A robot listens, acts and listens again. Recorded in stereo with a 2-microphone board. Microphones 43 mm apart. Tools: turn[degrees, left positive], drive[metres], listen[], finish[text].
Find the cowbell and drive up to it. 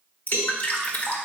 Thought: The cowbell: about 65° right or 115° right.
Action: turn[-65]
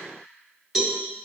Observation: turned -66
Thought: So it is at 10° right.
Action: turn[-10]
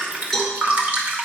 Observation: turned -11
Action: drive[1.0]
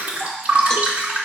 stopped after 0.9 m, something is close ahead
Action: listen[]
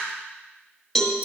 Thought: The cowbell is now 10° left.
Action: turn[10]
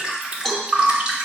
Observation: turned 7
Action: finish[I am next to the cowbell.]